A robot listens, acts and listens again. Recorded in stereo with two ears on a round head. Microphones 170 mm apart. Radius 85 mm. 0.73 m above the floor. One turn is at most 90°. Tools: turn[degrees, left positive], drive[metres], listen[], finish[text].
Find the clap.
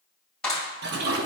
Action: turn[30]
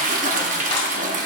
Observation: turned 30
Action: listen[]
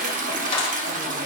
Thought: So it is at 150° left.
Action: turn[90]
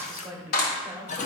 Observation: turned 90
Thought: The clap is now 50° left.
Action: turn[50]
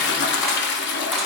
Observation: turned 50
Action: listen[]
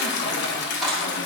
Action: finish[Facing the clap, 2 to 4 m away.]